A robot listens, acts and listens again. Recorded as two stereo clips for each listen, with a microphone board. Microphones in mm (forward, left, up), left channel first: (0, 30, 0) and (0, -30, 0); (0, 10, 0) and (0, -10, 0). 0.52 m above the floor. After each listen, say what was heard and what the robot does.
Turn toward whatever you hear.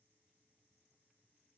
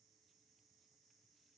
Keep listening.
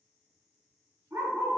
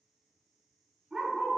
The dog barking: about 65° right or 115° right. Turn 65° right.
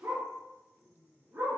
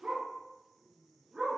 So it is at 50° right. Turn 50° right.
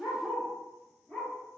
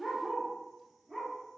The dog barking is now 10° left. Turn 10° left.
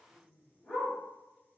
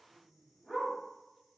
Facing the dog barking.